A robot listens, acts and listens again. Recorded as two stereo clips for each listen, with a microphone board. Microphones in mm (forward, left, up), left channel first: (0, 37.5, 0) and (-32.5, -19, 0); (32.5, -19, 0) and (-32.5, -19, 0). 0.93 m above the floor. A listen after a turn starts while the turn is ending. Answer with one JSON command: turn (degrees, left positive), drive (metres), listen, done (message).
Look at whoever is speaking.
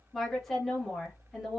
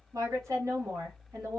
{"turn": 145}
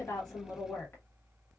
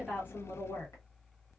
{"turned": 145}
{"turn": 15}
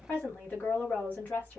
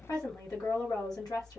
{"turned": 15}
{"done": "Found it: a woman speaking, straight ahead, 1 to 2 m away."}